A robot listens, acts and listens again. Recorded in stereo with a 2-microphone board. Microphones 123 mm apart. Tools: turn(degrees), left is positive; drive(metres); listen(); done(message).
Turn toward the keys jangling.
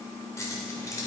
turn(degrees=25)
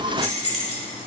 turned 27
turn(degrees=125)
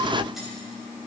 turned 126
listen()
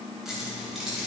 done("Found it: keys jangling, straight ahead, over 4 m away.")